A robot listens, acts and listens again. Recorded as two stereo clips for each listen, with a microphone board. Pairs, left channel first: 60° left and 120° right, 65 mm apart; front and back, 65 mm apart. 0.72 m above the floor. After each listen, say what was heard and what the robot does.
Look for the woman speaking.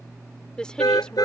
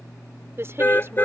The woman speaking: 135° left. Turn 135° left.
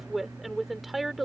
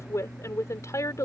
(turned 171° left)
The woman speaking is now 35° right. Turn 35° right.
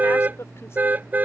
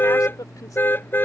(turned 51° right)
The woman speaking is now 15° left. Turn 15° left.
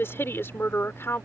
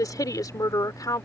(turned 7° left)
The woman speaking is now 10° left. Turn 10° left.
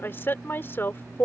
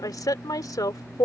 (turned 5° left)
Facing the woman speaking.